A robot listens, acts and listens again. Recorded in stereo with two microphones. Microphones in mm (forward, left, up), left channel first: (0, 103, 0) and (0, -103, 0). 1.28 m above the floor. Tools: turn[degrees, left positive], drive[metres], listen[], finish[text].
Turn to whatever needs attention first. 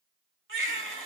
Thought: The baby crying: about 70° right or 110° right.
Action: turn[-70]
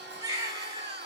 Thought: So it is at 20° right.
Action: turn[-20]
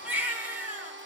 Thought: The baby crying is now 10° right.
Action: turn[-10]
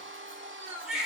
Action: finish[Found it: a baby crying, straight ahead, 2 to 4 m away.]